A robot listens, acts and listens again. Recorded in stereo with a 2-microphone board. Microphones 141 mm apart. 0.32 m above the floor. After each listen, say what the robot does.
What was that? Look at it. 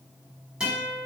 Turn 30° right.
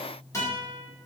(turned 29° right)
Turn 25° left.
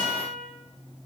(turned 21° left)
Found it: a guitar, straight ahead, 1 to 2 m away.